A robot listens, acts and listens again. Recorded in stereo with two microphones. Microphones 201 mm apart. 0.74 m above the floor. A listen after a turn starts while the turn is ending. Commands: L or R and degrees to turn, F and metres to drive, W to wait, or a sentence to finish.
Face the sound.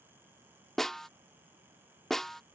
L30
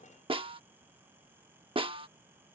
R25
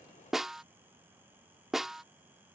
Found it: a snare drum, straight ahead.